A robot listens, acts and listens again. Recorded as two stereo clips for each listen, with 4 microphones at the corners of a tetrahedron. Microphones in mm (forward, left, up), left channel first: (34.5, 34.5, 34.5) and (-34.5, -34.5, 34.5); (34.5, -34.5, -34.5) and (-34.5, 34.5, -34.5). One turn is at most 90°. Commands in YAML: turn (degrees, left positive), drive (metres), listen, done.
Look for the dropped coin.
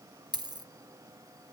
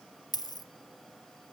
turn: -90
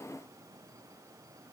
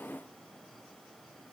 done: "Facing where the dropped coin came from. I can't hear it now."